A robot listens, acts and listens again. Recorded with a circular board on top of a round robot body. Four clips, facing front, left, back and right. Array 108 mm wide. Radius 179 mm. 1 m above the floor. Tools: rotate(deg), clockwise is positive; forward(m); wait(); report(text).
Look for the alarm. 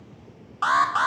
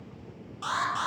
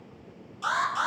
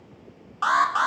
rotate(40)
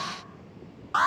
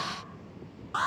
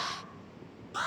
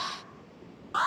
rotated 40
report("Found it: an alarm, straight ahead.")